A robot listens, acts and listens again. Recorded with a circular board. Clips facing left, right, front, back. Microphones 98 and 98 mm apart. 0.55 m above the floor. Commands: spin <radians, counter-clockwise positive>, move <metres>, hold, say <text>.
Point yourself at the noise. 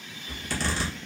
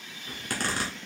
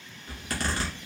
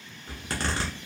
spin -2.18
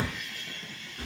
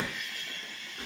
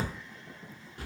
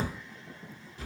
spin -0.44
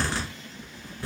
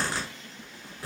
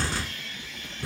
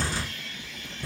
say Found it: a zipper, straight ahead, 1 to 2 m away.